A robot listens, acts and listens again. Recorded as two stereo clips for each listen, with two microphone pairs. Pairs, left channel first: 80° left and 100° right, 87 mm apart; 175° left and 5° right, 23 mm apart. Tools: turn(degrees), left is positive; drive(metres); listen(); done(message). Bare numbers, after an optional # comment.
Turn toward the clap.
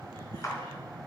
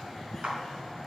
# The clap: 25° left.
turn(25)
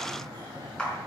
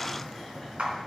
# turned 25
done("Found it: a clap, straight ahead, 2 to 4 m away.")